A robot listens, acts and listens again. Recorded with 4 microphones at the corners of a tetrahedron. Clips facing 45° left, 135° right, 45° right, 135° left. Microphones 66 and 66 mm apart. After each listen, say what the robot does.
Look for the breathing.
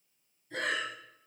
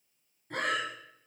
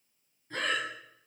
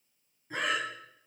Turn 150° right.
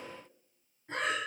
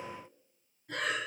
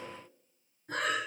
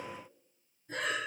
Turn 15° right.
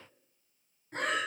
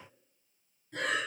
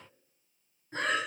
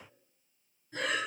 Found it: breathing, straight ahead.